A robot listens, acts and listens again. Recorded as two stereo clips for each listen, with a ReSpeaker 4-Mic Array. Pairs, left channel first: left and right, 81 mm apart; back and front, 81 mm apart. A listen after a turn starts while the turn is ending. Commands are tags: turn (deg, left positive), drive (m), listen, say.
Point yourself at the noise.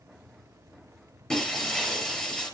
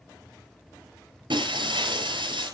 <say>Found it: breaking glass, straight ahead.</say>